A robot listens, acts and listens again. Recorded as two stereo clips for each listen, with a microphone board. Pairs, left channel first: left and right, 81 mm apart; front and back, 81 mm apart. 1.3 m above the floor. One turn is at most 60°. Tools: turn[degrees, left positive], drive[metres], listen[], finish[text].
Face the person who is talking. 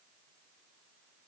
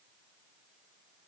Action: listen[]
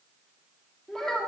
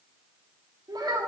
Thought: The child speaking: 175° left.
Action: turn[60]
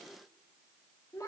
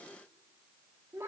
Thought: The child speaking is now 130° left.
Action: turn[60]
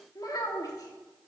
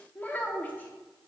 Thought: The child speaking is now 65° left.
Action: turn[60]
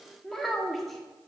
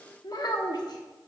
Action: finish[Facing the child speaking, 1 to 2 m away.]